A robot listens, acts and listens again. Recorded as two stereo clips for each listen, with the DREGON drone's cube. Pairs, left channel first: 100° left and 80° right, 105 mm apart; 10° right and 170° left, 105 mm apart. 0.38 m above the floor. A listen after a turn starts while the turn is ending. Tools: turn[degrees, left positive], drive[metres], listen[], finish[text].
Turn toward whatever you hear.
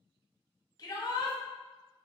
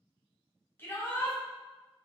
Thought: The shout: 55° left.
Action: turn[55]
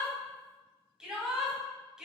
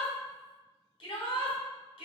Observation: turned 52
Action: finish[Found it: a shout, straight ahead.]